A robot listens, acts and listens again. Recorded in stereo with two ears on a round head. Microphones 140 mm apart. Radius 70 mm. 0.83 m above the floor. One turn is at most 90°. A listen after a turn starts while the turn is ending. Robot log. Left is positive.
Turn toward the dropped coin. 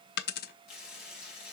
note: The dropped coin: about 65° left or 115° left.
cmd yaw +65
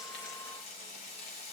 cmd idle
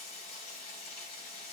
end: I heard a dropped coin, but can't make it out now. It was about straight ahead or 50° left.